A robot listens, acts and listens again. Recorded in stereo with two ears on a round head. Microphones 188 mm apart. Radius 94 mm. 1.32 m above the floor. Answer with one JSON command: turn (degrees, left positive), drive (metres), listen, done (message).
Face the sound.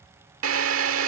{"turn": -70}
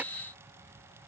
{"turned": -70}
{"listen": true}
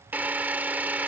{"turn": -10}
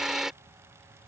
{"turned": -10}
{"done": "Found it: a drill, straight ahead."}